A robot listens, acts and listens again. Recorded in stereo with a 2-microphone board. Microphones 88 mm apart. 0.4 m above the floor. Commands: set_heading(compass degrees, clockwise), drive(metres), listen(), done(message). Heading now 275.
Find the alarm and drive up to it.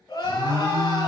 set_heading(340)
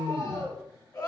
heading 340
set_heading(5)
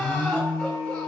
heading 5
drive(1.0)
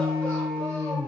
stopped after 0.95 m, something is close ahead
done("I am next to the alarm.")